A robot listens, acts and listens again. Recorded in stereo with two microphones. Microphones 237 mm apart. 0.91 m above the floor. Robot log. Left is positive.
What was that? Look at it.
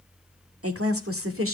note: The woman speaking: about 65° right or 115° right.
cmd yaw -65
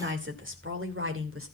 note: So it is at 65° right.
cmd yaw -65
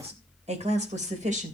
note: The woman speaking is now 30° right.
cmd yaw -30
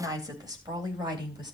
note: The woman speaking is now 20° right.
cmd yaw -20
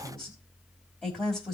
end: Found it: a woman speaking, straight ahead.